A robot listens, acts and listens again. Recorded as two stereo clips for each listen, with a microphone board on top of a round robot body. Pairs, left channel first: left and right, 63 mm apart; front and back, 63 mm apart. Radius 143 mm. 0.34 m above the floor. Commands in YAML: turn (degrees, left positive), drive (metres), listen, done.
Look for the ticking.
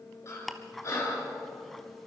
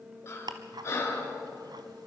turn: 175
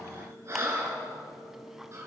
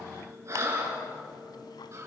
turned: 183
listen: true
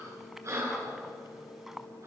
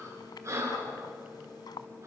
done: "Facing the ticking, 1 to 2 m away."